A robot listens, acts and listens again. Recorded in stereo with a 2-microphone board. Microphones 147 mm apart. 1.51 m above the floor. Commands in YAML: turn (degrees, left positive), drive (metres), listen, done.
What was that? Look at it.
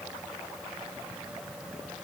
listen: true
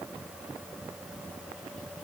listen: true
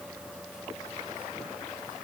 done: "I can't make out anything."